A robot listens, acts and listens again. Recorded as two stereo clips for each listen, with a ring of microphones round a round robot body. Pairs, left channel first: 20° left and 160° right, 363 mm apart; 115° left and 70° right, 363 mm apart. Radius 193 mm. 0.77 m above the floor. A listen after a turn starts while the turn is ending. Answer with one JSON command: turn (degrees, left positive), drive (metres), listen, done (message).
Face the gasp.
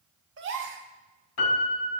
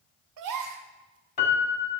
{"turn": -100}
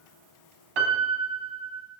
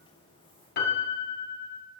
{"done": "Facing where the gasp came from. I can't hear it now."}